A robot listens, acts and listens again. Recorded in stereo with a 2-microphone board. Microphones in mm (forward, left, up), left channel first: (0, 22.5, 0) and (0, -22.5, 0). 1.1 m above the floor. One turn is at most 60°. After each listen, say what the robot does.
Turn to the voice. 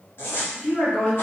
Turn 35° left.
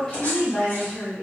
Facing the woman speaking.